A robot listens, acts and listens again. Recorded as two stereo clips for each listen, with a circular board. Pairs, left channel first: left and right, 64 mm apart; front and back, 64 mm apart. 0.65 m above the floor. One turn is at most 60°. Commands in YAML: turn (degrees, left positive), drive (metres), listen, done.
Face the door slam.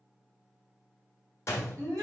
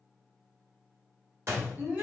turn: 60
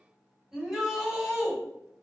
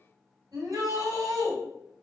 turn: 60
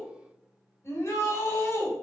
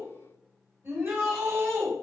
turn: 15
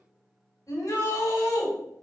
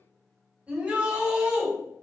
done: "I heard a door slam from this way, but can't make it out now."